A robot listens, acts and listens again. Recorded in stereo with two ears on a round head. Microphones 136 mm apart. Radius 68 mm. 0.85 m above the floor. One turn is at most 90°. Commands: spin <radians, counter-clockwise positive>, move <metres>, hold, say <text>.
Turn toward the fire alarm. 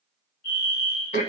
spin 1.05
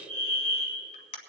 spin 0.17
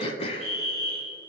say Facing the fire alarm.